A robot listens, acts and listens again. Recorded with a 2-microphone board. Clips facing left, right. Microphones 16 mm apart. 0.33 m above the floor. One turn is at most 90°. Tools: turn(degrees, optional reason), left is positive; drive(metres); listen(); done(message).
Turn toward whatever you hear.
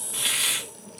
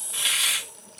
turn(degrees=-20, reason="The hiss: about 20° right or 160° right.")
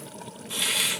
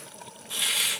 done("Found it: a hiss, straight ahead, 2 to 4 m away.")